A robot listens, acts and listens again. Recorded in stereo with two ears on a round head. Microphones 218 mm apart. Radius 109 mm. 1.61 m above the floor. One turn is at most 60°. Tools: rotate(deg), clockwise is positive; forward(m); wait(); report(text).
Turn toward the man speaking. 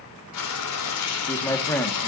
rotate(-30)
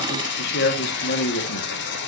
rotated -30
rotate(-60)
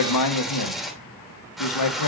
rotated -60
rotate(-60)
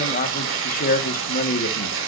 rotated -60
rotate(-35)
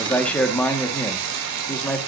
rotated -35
report("Found it: a man speaking, straight ahead.")